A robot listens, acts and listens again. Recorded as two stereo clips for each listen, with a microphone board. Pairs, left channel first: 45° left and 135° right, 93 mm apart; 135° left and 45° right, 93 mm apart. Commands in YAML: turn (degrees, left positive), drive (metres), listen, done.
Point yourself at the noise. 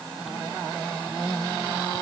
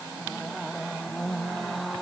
listen: true
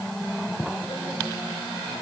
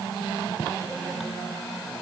listen: true
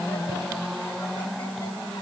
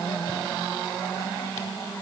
done: "I can't make out anything to turn to."